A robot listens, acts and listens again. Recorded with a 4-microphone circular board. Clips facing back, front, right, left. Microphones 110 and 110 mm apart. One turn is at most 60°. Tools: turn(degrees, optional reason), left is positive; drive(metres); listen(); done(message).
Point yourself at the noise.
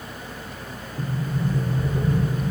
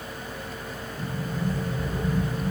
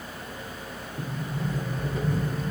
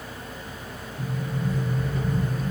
turn(degrees=-60, reason="The sliding door: 145° right.")
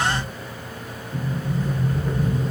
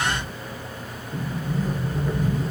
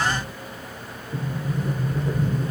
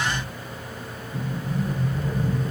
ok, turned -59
turn(degrees=-60, reason="The sliding door is now 85° right.")
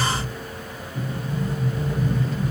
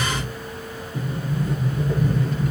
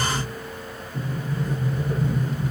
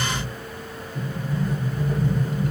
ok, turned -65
turn(degrees=-20, reason="The sliding door is now 20° right.")
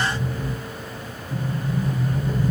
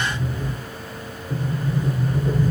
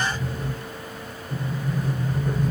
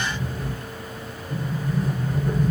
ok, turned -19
done("Facing the sliding door.")